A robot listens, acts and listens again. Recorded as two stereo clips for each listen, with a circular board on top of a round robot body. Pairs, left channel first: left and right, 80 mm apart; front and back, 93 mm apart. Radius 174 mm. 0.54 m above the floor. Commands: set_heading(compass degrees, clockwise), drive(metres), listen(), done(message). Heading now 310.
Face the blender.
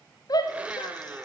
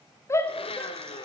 set_heading(325)
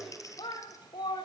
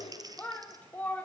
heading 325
listen()
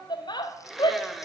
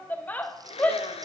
done("Found it: a blender, straight ahead, 1 to 2 m away.")